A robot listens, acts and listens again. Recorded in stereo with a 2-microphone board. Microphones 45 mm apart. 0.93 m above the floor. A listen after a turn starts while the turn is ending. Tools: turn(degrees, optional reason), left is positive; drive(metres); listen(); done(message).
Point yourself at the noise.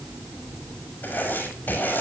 turn(degrees=50, reason="The writing: about 50° left or 130° left.")
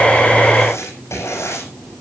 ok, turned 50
turn(degrees=80, reason="So it is at 80° left.")
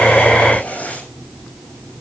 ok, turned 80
turn(degrees=30, reason="The writing is now 30° left.")
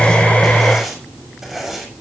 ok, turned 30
turn(degrees=-10, reason="The writing is now 10° right.")
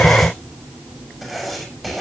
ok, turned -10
done("Facing the writing.")